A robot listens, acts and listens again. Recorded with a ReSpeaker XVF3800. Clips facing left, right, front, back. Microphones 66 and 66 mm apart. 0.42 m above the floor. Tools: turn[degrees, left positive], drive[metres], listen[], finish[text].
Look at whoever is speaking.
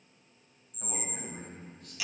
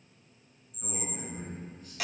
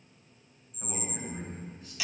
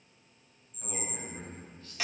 Thought: The man speaking: 70° left.
Action: turn[70]
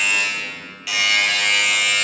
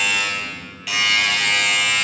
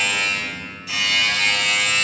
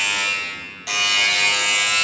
Action: listen[]
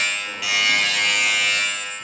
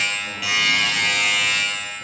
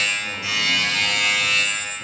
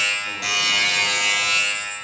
Action: listen[]
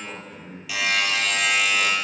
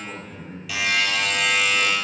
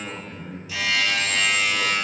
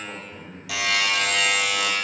Thought: The man speaking is now 15° left.
Action: turn[15]
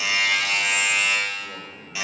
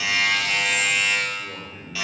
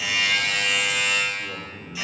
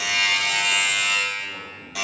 Action: finish[Found it: a man speaking, straight ahead, over 4 m away.]